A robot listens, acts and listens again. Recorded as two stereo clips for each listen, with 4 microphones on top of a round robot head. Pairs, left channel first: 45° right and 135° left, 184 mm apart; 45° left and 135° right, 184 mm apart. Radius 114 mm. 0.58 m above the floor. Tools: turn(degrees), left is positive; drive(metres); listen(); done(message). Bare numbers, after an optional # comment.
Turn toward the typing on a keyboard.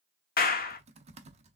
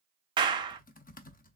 # The typing on a keyboard: 85° left.
turn(85)
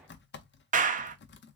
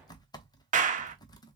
# The typing on a keyboard is now 25° right.
turn(-25)
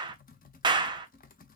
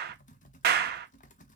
done("Found it: typing on a keyboard, straight ahead, under 1 m away.")